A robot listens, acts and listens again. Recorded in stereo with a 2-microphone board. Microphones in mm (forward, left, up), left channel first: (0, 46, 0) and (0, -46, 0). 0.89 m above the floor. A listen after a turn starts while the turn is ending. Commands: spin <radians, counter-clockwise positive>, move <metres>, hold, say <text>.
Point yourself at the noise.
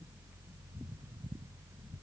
hold
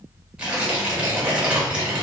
spin -0.52
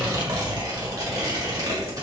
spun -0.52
spin -2.44
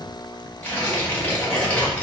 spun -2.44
spin 0.35
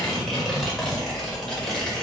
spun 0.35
say Found it: tearing paper, straight ahead, 1 to 2 m away.